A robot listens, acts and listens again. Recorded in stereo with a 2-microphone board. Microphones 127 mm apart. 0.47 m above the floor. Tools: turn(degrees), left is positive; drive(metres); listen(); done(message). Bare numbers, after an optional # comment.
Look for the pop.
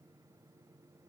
listen()
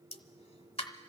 # The pop: about 50° left or 130° left.
turn(50)
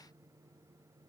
listen()
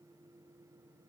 done("I heard a pop, but can't make it out now. It was about straight ahead or 80° left.")